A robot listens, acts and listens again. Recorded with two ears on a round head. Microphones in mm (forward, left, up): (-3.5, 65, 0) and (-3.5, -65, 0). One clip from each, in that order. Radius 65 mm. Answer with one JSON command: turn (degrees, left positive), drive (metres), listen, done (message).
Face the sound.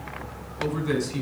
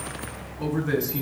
{"turn": 60}
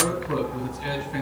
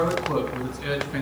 {"done": "Facing the man speaking, over 4 m away."}